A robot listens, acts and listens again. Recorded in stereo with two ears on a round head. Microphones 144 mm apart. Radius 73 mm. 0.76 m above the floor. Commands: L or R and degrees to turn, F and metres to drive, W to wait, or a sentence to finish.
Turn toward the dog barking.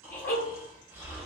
L90
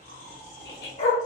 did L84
L45
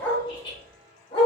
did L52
L30
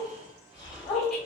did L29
L20
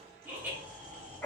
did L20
Found it: a dog barking, straight ahead, 1 to 2 m away.